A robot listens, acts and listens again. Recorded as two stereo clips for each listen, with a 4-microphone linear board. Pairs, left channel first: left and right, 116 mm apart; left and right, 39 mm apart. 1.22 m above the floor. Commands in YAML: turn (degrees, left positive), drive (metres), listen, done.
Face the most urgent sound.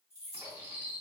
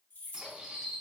listen: true
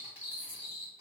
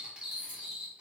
listen: true
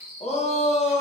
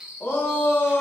turn: 70
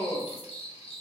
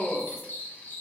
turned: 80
turn: 35
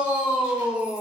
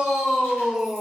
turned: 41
turn: -10
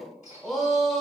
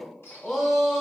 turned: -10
done: "Facing the shout, under 1 m away."